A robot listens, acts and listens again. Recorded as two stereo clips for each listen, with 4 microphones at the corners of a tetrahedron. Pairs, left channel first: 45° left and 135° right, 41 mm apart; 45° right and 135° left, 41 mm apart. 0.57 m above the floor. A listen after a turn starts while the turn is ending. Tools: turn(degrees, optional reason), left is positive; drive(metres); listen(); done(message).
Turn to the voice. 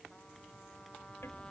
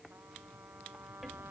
listen()
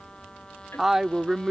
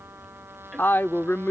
turn(degrees=-60, reason="The woman speaking: 60° right.")
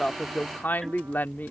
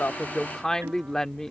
turn(degrees=25, reason="The woman speaking is now 25° left.")
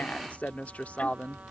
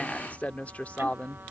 done("Found it: a woman speaking, straight ahead.")